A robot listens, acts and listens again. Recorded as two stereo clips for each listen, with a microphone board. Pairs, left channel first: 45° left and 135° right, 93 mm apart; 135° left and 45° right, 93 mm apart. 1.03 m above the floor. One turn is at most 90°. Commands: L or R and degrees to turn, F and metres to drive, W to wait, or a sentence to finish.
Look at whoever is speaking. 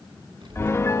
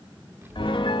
R90
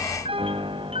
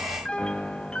R20
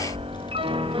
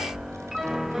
L15
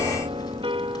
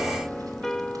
W
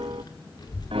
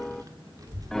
Found it: a child speaking, straight ahead.